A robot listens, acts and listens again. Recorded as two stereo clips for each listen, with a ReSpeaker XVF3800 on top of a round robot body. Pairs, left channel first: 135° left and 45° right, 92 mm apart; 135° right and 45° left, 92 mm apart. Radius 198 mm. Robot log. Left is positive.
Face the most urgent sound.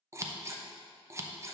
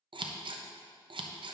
cmd idle
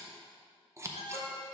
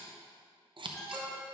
note: The alarm: 135° left.
cmd yaw +135
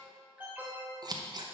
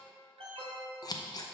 note: The alarm is now 30° left.
cmd yaw +30
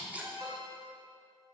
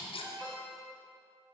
end: Facing the alarm.